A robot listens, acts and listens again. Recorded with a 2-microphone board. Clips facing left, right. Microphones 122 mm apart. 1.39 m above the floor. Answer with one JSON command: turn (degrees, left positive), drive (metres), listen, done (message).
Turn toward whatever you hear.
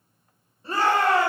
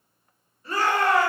{"turn": 30}
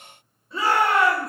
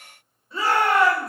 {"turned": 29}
{"done": "Facing the shout."}